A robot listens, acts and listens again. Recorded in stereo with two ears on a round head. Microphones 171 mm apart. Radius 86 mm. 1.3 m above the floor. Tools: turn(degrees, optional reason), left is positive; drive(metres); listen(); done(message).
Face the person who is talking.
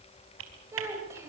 turn(degrees=-30)
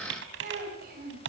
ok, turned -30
turn(degrees=-130, reason="So it is at 130° right.")
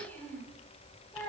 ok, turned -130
turn(degrees=10, reason="The child speaking is now 10° left.")
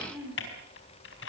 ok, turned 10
done("Found it: a child speaking, straight ahead, over 4 m away.")